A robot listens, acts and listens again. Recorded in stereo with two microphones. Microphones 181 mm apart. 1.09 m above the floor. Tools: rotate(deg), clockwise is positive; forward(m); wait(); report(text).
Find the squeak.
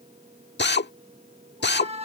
rotate(35)
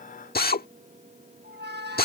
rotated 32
rotate(110)
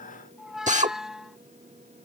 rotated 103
report("Facing the squeak.")